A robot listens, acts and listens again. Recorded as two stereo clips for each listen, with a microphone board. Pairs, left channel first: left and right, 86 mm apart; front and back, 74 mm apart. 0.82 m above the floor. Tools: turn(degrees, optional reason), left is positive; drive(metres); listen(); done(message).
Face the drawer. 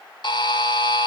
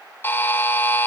listen()
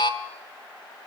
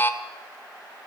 listen()
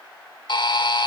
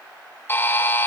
done("I can't make out a drawer, only a buzzer.")